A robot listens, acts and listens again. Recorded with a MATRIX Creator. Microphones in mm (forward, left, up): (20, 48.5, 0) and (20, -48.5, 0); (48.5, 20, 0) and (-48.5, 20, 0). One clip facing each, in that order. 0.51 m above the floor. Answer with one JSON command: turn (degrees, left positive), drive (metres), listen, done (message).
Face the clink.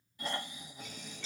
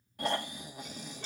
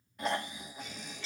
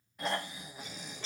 {"turn": -125}
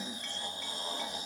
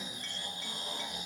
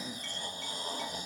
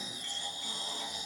{"listen": true}
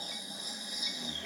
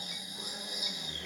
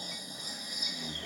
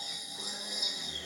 {"listen": true}
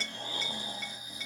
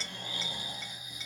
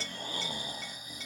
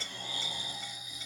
{"done": "I heard a clink from this way, but can't make it out now."}